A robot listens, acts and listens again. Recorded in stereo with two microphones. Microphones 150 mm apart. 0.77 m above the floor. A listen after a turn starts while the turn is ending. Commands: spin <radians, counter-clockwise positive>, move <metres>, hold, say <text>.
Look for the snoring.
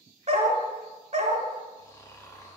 spin 0.35
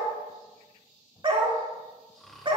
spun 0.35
say Facing the snoring, 1 to 2 m away.